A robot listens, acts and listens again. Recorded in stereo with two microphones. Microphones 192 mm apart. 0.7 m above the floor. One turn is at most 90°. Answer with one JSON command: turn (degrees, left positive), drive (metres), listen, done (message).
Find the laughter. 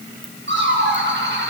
{"turn": -75}
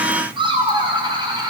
{"turn": -25}
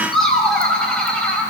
{"done": "Facing the laughter."}